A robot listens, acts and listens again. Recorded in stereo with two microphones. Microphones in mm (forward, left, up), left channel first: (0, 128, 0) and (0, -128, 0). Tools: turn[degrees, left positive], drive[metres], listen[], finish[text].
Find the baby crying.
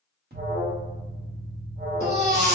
Thought: The baby crying: about 40° right or 140° right.
Action: turn[-40]
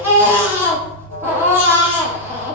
Thought: So it is at 10° right.
Action: turn[-10]
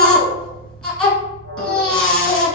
Action: finish[Found it: a baby crying, straight ahead.]